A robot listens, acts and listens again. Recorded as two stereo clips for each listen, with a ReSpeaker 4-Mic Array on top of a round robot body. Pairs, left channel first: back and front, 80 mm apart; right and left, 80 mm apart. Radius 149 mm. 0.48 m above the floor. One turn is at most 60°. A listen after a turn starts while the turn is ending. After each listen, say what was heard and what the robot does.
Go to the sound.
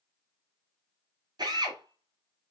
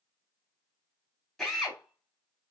Drive 1.0 m forward.
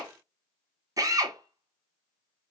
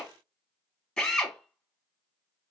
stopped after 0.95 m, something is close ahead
The drill is now 15° right. Turn 15° right.
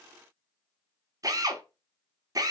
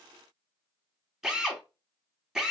I am next to the drill.